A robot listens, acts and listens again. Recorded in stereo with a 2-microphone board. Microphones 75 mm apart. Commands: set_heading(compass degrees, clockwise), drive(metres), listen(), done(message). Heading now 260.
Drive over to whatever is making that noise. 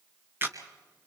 set_heading(290)
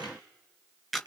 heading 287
drive(1.0)
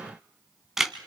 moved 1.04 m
drive(1.0)
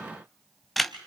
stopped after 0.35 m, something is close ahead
done("Arrived at the camera shutter, straight ahead.")